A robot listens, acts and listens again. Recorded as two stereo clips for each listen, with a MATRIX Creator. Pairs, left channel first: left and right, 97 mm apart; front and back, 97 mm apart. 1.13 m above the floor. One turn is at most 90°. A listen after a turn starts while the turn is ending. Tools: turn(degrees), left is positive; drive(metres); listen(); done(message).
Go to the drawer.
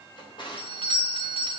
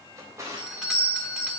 turn(degrees=90)
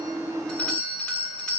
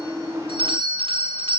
turn(degrees=30)
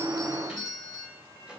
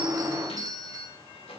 turn(degrees=-10)
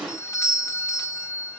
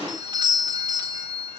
listen()
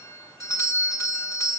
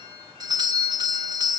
listen()
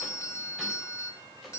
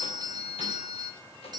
done("I heard a drawer from this way, but can't make it out now. I did not reach it.")